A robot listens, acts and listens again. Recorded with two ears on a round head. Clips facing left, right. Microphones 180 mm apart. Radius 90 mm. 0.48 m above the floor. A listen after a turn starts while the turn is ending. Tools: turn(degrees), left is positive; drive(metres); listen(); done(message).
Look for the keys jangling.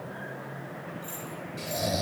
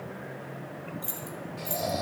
turn(degrees=-90)
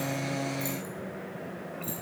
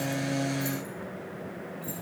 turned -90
listen()
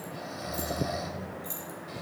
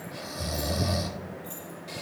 turn(degrees=25)
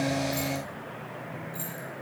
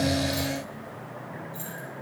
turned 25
done("Found it: keys jangling, straight ahead, over 4 m away.")